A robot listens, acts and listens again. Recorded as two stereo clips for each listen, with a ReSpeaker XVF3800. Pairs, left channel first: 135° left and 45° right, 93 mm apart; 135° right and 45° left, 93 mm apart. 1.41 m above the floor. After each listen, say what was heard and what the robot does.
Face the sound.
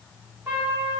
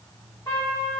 The trumpet: 110° right. Turn 110° right.
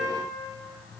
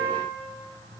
The trumpet is now 25° left. Turn 25° left.
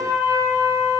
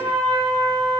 Found it: a trumpet, straight ahead.